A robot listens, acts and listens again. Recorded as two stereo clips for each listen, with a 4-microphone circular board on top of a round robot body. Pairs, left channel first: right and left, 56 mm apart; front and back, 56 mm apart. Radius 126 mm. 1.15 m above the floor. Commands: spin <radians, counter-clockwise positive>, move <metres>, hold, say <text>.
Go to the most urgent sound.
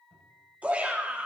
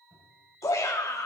spin 0.44
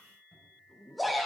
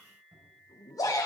move 1.0
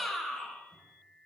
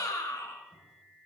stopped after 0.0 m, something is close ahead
say Something is in my way. I am facing the shout but have not reached it.